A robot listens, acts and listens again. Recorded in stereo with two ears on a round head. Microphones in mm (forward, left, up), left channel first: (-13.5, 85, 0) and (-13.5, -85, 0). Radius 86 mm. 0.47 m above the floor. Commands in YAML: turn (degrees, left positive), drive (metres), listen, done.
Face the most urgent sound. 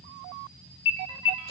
turn: 65
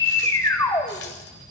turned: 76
turn: 20
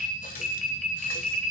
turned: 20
done: "Found it: an alarm, straight ahead."